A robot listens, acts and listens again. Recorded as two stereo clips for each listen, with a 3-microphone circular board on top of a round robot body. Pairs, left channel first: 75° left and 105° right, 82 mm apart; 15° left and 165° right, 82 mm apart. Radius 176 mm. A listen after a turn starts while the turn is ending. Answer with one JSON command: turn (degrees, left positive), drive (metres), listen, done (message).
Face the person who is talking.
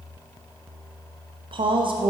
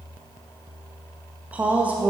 {"turn": -90}
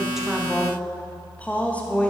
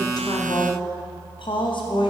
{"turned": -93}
{"done": "Facing the woman speaking, 1 to 2 m away."}